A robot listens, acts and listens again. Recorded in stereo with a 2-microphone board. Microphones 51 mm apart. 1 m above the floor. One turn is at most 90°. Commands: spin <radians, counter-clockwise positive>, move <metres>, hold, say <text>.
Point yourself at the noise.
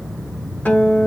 spin 0.61
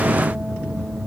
hold
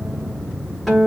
say Found it: a guitar, straight ahead.